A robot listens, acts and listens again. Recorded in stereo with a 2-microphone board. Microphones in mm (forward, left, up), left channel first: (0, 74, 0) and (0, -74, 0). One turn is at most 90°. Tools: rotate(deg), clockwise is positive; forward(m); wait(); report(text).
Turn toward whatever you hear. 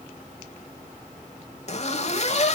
rotate(-50)
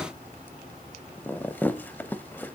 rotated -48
rotate(-15)
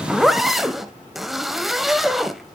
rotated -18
report("Facing the zipper, under 1 m away.")